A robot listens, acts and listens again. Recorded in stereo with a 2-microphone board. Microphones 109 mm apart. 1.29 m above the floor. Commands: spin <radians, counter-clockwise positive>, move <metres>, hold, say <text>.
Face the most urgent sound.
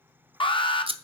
spin 0.87
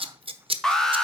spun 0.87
say Facing the alarm, 1 to 2 m away.